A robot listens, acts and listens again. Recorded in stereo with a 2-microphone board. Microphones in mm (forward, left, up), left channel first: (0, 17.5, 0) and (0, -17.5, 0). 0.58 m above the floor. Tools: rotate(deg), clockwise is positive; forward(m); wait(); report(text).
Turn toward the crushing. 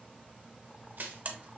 rotate(65)
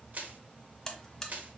rotate(50)
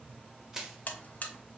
rotate(15)
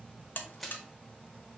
report("Facing the crushing, under 1 m away.")